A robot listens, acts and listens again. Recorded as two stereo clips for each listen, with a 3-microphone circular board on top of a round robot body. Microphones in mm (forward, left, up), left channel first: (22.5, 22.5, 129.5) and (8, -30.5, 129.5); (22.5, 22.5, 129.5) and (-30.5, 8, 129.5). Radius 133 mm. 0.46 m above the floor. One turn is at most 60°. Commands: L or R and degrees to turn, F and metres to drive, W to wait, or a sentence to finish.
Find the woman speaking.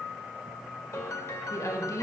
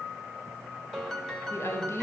L55
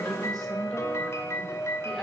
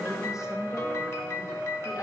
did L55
R10
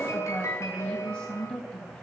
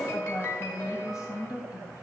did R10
Found it: a woman speaking, straight ahead, 2 to 4 m away.